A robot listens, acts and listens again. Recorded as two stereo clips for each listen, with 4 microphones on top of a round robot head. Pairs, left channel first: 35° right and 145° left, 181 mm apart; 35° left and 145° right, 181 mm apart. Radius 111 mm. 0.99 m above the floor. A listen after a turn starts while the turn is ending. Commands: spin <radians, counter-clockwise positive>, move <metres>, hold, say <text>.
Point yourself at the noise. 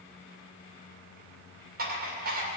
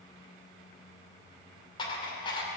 spin 1.83
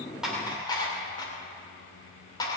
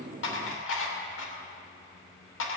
spin 0.52
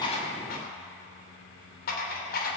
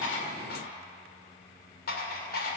say Found it: dishes clattering, straight ahead.